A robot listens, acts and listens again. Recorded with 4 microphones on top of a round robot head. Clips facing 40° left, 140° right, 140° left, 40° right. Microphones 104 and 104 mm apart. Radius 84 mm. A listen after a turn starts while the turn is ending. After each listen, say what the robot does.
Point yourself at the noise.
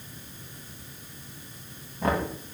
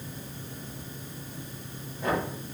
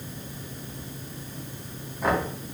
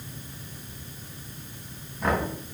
Turn 55° left.
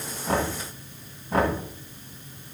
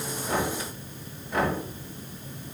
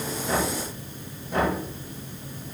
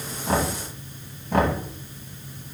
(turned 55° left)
Turn 15° right.
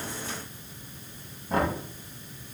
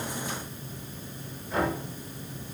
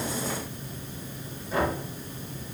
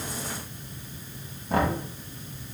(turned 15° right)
Facing the knocking, 2 to 4 m away.